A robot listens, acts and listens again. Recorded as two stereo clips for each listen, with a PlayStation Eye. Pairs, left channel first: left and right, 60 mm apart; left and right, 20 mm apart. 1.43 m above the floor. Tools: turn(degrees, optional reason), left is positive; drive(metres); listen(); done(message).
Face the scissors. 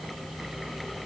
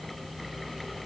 listen()
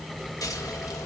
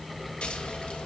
listen()
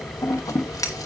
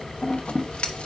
turn(degrees=90)
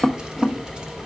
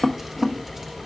turn(degrees=-15, reason="So it is at 15° right.")
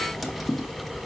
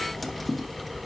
done("Facing the scissors, 1 to 2 m away.")